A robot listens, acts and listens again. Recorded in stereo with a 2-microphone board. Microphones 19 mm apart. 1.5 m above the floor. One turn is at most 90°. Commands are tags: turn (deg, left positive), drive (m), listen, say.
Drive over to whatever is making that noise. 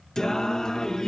<turn deg="35"/>
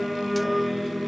<drive m="1.0"/>
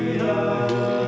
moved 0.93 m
<drive m="1.0"/>
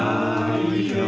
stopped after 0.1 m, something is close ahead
<say>I am next to the singing.</say>